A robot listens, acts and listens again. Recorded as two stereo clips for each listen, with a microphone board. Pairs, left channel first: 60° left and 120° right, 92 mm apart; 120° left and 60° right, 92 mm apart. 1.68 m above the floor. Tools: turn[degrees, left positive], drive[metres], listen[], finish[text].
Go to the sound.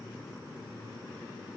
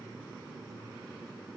Action: listen[]
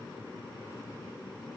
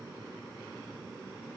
Action: listen[]
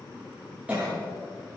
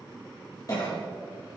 Thought: The cough: 165° left.
Action: turn[165]
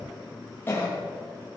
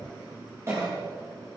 Action: drive[1.0]
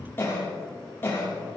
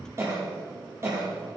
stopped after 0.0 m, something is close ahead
Action: finish[Something is in my way. I am facing the cough but have not reached it.]